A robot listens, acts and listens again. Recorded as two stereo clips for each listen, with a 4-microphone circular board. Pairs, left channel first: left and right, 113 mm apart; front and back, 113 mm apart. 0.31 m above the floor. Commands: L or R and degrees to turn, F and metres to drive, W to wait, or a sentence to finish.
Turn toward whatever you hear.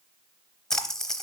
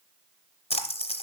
Found it: a splash, straight ahead.